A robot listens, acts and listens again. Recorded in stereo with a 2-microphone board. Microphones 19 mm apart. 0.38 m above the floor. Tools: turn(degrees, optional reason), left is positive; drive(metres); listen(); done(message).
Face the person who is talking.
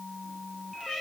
listen()
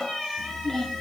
turn(degrees=30, reason="The child speaking: about 30° left or 150° left.")
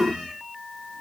listen()
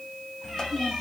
turn(degrees=125, reason="So it is at 125° left.")
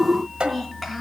turn(degrees=-10, reason="The child speaking is now 10° right.")
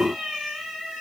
listen()
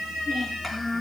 done("Found it: a child speaking, straight ahead, over 4 m away.")